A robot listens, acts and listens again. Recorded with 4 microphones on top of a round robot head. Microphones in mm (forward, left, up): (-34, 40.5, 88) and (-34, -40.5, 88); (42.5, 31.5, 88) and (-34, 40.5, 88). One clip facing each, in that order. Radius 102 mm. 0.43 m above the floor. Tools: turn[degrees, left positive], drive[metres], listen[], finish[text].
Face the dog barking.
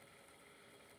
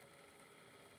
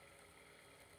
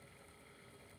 Action: listen[]
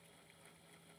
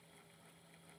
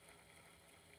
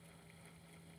Action: listen[]
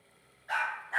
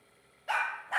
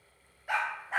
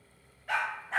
Thought: The dog barking: 85° right.
Action: turn[-85]
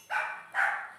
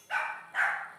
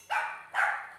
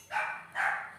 Thought: The dog barking is now 10° left.
Action: turn[10]
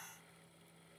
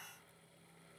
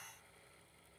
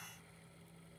Action: listen[]
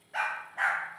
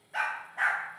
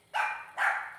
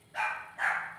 Action: finish[Facing the dog barking, under 1 m away.]